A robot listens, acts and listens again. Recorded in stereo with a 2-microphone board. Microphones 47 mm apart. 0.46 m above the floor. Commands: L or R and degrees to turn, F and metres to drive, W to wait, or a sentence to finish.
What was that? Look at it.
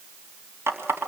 R65
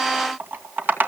R45
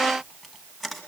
Facing the running tap, 2 to 4 m away.